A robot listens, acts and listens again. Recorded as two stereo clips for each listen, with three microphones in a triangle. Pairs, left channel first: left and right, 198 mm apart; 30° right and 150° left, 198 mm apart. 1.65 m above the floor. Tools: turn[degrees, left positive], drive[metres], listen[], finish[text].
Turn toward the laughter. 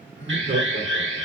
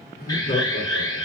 Thought: The laughter: 70° right.
Action: turn[-70]
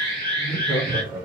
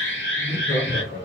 Thought: The laughter is now 25° right.
Action: turn[-25]
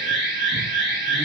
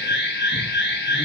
Action: listen[]
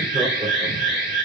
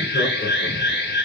Action: listen[]
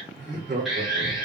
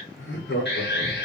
Thought: The laughter is now 50° right.
Action: turn[-50]
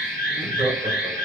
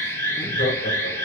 Action: listen[]
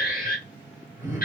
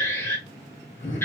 Action: listen[]
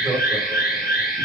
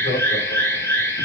Thought: The laughter is now 10° right.
Action: turn[-10]
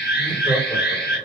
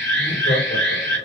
Action: listen[]
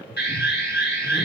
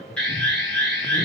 Action: finish[Found it: laughter, straight ahead.]